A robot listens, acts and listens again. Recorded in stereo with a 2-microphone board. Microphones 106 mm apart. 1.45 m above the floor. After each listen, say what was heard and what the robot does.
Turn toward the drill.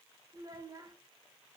Keep listening.
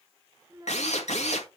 Turn 90° left.
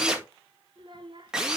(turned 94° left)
Facing the drill, 1 to 2 m away.